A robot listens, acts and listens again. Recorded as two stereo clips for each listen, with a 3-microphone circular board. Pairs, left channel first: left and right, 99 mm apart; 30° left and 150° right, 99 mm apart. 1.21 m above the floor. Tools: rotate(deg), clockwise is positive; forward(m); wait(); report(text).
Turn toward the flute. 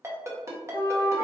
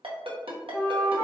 rotate(45)
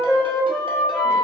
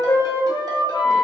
report("Facing the flute.")